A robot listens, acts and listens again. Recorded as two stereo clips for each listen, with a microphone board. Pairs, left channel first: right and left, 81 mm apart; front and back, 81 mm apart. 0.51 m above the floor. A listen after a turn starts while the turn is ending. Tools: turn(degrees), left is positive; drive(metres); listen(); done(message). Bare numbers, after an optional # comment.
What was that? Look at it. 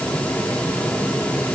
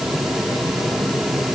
listen()
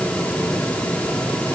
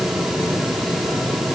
listen()
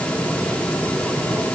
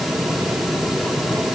done("I can't make out anything.")